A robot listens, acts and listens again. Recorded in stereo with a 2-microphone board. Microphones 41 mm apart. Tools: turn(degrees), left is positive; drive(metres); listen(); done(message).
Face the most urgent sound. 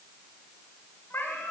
listen()
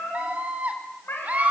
turn(degrees=-40)
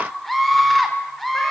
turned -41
done("Facing the scream.")